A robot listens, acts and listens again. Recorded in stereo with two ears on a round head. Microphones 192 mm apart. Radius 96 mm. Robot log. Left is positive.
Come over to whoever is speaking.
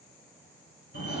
cmd idle
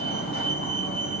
cmd idle
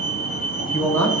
cmd yaw +30
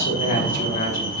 note: So it is at 140° left.
cmd yaw +140
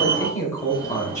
note: The man speaking is now 15° left.
cmd yaw +15
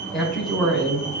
cmd fwd 1.0
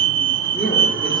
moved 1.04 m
cmd idle
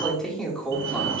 cmd fwd 1.0
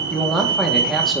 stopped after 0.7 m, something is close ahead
end: I am next to the man speaking.